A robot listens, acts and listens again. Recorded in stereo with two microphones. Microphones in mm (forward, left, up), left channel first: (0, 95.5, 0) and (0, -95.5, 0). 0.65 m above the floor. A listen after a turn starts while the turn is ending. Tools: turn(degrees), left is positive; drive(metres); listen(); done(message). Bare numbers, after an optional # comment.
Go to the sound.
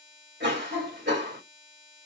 # The cough: about 65° right or 115° right.
turn(-65)
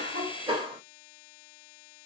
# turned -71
# So it is at 30° right.
turn(-30)
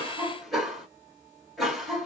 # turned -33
drive(1.0)
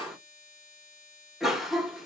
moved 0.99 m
drive(1.0)
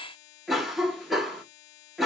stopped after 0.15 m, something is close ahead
done("I am next to the cough.")